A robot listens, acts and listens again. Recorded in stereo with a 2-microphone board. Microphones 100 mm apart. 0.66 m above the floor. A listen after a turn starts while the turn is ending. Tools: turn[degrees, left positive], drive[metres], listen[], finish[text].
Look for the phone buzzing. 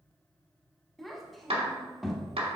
Action: listen[]
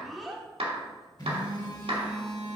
Thought: The phone buzzing: about 50° left or 130° left.
Action: turn[50]
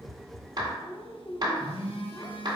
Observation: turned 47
Thought: So it is at 80° left.
Action: turn[80]
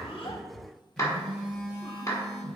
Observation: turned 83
Action: finish[Found it: a phone buzzing, straight ahead, 1 to 2 m away.]